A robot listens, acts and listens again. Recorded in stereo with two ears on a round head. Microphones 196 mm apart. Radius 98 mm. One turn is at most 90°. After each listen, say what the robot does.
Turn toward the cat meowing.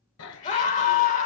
Turn 90° left.
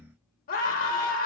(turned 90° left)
Keep listening.
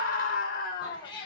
Turn 25° left.
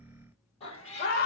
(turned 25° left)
Turn 30° left.
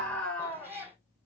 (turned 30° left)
Turn 10° right.
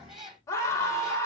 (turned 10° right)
Facing the cat meowing, 2 to 4 m away.